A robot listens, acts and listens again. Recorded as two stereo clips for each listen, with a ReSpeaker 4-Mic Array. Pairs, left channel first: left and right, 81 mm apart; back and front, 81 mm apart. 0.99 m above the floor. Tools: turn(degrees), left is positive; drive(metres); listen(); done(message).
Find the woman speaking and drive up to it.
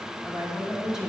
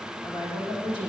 turn(degrees=-170)
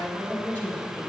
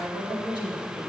turn(degrees=20)
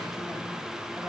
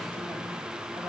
listen()
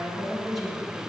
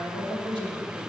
drive(metres=1.0)
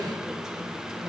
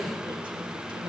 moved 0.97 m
turn(degrees=-10)
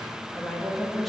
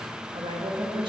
drive(metres=1.0)
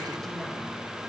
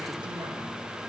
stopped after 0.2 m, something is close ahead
listen()
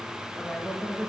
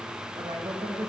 done("Arrived at the woman speaking, straight ahead.")